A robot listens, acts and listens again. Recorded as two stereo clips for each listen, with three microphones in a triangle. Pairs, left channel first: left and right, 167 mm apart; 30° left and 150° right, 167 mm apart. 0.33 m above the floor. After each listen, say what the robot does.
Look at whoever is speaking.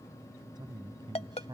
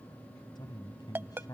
Turn 35° right.
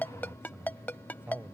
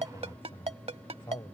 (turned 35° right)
Turn 20° right.
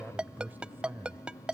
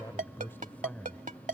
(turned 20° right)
Turn 50° right.
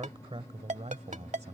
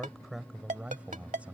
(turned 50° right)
Turn 70° right.
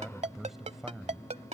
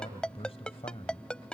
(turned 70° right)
Found it: a man speaking, straight ahead.